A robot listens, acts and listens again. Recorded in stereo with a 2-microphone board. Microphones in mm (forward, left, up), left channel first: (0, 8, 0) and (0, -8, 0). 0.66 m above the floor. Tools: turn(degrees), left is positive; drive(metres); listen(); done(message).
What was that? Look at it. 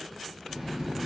turn(degrees=-65)
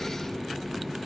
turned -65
turn(degrees=-10)
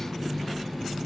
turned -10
done("Found it: a running tap, straight ahead.")